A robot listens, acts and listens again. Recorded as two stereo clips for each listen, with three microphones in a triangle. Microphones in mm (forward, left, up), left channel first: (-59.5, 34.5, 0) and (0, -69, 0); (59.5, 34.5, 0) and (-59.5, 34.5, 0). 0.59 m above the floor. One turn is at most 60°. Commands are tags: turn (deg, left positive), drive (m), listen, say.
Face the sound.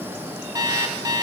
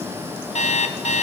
<say>Facing the alarm clock, 1 to 2 m away.</say>